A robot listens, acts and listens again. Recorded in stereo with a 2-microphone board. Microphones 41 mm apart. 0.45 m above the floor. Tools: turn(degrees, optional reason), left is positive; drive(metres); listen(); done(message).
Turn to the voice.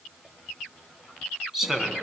turn(degrees=-30)
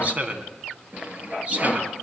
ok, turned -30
turn(degrees=-140, reason="So it is at 140° right.")
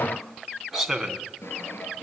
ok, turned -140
done("Facing the man speaking, 2 to 4 m away.")